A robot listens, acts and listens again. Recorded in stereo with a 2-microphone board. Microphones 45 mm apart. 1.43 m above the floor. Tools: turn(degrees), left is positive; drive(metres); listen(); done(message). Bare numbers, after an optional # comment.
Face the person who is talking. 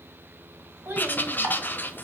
# The child speaking: about 45° right or 135° right.
turn(-45)
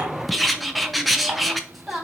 done("Found it: a child speaking, straight ahead.")